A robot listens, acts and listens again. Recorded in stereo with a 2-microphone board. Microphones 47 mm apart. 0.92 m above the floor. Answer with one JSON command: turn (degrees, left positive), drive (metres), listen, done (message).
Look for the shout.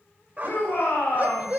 {"turn": 60}
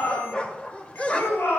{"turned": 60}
{"turn": 60}
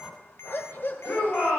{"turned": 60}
{"turn": 30}
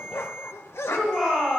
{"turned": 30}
{"turn": 10}
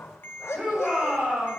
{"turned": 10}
{"done": "Facing the shout."}